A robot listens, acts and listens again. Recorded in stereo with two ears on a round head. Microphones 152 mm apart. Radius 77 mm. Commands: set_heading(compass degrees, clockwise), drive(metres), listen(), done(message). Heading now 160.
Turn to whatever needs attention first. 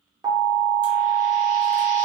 set_heading(180)
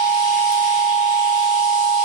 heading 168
set_heading(198)
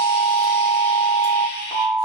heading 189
set_heading(179)
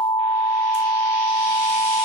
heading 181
done("Facing the alarm.")